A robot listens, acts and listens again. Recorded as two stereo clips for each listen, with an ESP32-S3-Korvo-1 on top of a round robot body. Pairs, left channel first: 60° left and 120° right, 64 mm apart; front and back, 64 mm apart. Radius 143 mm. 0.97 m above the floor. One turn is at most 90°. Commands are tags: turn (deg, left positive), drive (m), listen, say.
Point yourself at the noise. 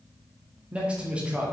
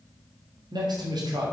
<turn deg="90"/>
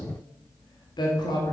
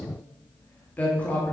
<turn deg="70"/>
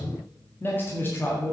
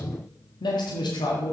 <say>Found it: a man speaking, straight ahead.</say>